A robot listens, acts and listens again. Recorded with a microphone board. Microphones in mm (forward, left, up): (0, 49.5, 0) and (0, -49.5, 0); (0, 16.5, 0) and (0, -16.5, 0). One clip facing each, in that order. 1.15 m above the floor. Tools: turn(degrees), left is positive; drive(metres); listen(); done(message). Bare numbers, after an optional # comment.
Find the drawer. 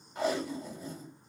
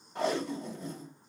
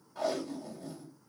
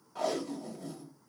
listen()
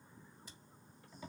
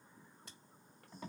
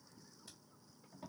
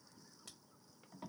listen()
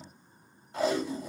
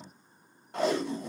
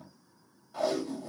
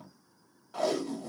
done("I can't make out a drawer to turn to.")